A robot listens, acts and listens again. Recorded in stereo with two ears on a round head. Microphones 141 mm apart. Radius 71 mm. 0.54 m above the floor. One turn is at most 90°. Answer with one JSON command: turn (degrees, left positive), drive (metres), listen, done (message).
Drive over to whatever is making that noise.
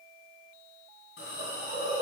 {"turn": 75}
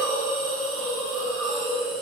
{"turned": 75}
{"drive": 1.0}
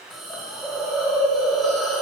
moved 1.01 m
{"drive": 1.0}
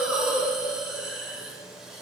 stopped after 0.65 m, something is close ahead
{"done": "Arrived at the hiss, straight ahead."}